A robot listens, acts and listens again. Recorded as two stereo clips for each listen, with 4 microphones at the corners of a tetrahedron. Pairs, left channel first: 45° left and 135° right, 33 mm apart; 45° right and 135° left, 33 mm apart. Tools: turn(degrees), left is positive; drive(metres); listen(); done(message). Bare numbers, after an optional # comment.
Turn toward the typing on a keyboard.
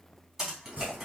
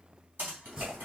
# The typing on a keyboard: 150° left.
turn(150)
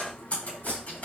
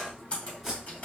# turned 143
done("Facing the typing on a keyboard, 2 to 4 m away.")